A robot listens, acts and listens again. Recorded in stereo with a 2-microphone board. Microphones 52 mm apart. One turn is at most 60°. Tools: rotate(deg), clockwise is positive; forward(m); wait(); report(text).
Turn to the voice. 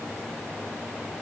wait()
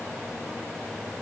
wait()
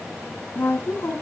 rotate(-45)
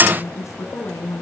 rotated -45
rotate(-60)
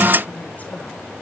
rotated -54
rotate(-35)
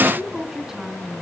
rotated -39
report("Facing the woman speaking.")